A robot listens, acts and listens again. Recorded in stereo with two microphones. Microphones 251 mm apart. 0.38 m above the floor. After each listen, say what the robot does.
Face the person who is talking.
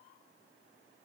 Keep listening.
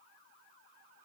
Keep listening.
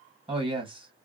Turn 20° right.
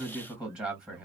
Found it: a man speaking, straight ahead, 2 to 4 m away.